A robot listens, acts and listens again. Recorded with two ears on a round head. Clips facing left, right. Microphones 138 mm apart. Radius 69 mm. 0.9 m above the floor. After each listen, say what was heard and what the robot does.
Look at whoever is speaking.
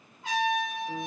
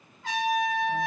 Keep listening.
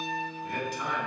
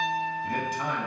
The man speaking: about 45° right or 135° right. Turn 45° right.
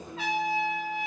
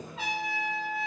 So it is at 85° right. Turn 85° right.
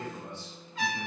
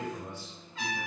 The man speaking is now 10° right. Turn 10° right.
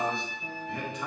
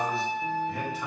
Found it: a man speaking, straight ahead, under 1 m away.